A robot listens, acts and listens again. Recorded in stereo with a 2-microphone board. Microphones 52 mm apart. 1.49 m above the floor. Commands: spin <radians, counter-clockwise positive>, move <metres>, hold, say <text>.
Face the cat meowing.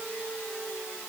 hold
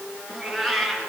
spin 0.52
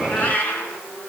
spin 2.53
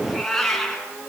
say Found it: a cat meowing, straight ahead, over 4 m away.